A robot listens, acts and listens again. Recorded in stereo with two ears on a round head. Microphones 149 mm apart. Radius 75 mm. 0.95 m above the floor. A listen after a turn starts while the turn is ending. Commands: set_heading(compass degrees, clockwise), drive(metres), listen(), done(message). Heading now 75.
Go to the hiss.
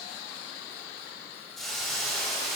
set_heading(45)
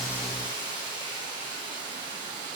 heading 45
set_heading(70)
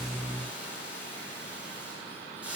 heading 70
drive(1.0)
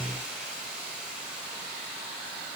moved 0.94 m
drive(1.0)
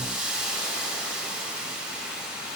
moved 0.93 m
drive(1.0)
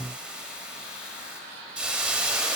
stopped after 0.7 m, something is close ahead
done("Arrived at the hiss, straight ahead.")